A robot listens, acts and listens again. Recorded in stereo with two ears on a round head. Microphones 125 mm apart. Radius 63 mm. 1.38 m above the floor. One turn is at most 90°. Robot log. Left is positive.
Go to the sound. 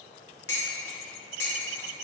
note: The dishes clattering: about 20° left or 160° left.
cmd yaw +20
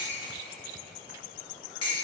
note: So it is at 140° left.
cmd yaw +90
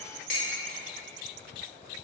note: The dishes clattering is now 60° left.
cmd yaw +60
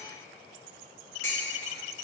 note: The dishes clattering is now 20° left.
cmd yaw +20
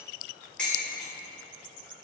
note: The dishes clattering is now 10° left.
cmd yaw +10
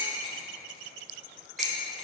cmd fwd 1.0
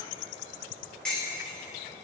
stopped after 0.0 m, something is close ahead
end: Blocked. The dishes clattering is further on, straight ahead.